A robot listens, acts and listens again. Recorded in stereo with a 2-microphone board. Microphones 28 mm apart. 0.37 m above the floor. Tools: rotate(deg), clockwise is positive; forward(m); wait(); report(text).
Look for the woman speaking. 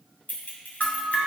wait()
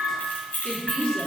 rotate(-30)
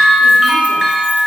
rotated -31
wait()
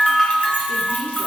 wait()
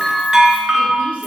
report("I heard a woman speaking, but can't make it out now. It was about straight ahead or 120° left.")